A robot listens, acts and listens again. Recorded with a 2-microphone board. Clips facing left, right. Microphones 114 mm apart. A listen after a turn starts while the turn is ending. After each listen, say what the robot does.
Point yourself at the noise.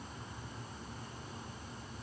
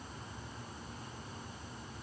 Keep listening.
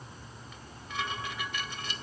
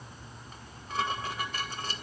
Turn 40° right.
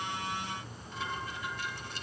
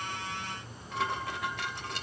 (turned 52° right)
Turn 90° right.
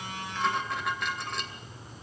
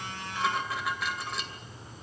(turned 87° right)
Found it: dishes clattering, straight ahead, 2 to 4 m away.